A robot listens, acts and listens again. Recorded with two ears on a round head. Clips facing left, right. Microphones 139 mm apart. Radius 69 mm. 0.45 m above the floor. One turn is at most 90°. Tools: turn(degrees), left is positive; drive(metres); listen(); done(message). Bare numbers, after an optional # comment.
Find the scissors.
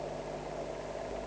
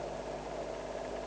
listen()
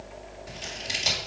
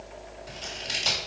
turn(30)
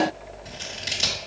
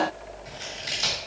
# So it is at 140° left.
turn(90)
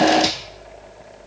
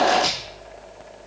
# The scissors is now 45° left.
turn(45)
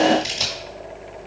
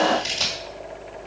# The scissors is now 15° left.
turn(15)
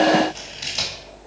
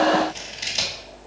done("Found it: scissors, straight ahead.")